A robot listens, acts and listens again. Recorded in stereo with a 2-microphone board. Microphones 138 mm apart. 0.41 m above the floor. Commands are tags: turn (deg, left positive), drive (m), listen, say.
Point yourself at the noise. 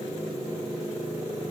<listen/>
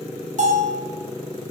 <turn deg="-65"/>
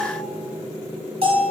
<turn deg="-50"/>
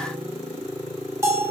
<turn deg="-20"/>
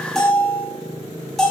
<say>Found it: a bell, straight ahead, 1 to 2 m away.</say>